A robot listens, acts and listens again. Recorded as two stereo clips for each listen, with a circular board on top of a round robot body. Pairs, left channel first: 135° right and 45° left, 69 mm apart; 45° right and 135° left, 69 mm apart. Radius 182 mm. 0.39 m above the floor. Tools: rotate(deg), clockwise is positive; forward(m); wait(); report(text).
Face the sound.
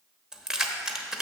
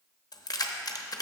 rotate(35)
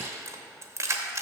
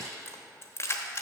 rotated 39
report("Facing the keys jangling.")